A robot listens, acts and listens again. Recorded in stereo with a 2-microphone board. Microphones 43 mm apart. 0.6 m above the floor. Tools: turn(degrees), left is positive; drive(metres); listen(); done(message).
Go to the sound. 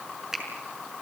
turn(degrees=-30)
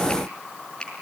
turn(degrees=20)
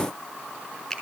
drive(metres=1.0)
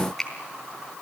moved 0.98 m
turn(degrees=10)
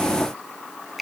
drive(metres=1.0)
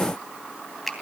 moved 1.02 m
drive(metres=1.0)
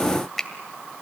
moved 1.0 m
drive(metres=1.0)
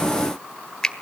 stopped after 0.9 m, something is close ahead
turn(degrees=15)
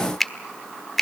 done("I am next to the finger snap.")